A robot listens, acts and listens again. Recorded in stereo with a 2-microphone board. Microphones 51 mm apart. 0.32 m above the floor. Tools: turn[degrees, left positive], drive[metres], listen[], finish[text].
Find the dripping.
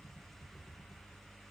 Action: listen[]
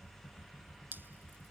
Thought: The dripping: about 45° right or 135° right.
Action: turn[-45]
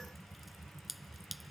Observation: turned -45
Action: finish[Facing the dripping.]